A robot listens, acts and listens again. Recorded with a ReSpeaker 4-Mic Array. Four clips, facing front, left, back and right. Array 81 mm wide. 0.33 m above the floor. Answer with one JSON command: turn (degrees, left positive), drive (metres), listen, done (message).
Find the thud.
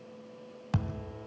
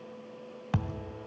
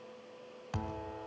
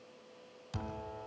{"turn": 75}
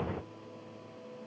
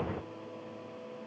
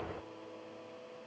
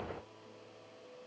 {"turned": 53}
{"turn": 20}
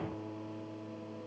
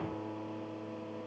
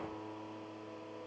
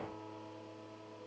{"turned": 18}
{"done": "Facing where the thud came from. I can't hear it now."}